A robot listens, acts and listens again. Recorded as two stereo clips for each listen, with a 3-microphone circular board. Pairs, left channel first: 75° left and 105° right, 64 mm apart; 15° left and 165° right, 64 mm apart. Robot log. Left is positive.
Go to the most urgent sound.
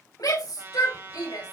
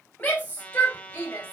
note: The shout: 80° left.
cmd yaw +80
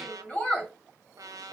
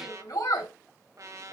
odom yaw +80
cmd fwd 1.0
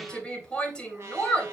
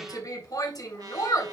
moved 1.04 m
cmd fwd 1.0
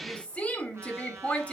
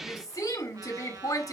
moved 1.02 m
cmd fwd 1.0
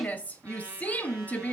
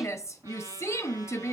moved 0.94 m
note: The shout is now 20° left.
cmd yaw +20
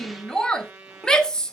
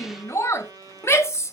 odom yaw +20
cmd fwd 1.0
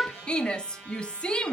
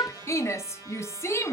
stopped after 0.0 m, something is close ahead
end: Arrived at the shout, straight ahead.